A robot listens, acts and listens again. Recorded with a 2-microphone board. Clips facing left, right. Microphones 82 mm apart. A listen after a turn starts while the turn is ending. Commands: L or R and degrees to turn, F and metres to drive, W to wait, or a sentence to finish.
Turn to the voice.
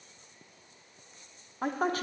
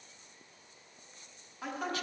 L40
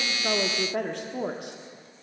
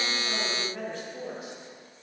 L95
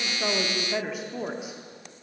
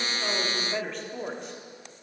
L10
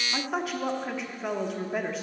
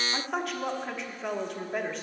Facing the woman speaking, 1 to 2 m away.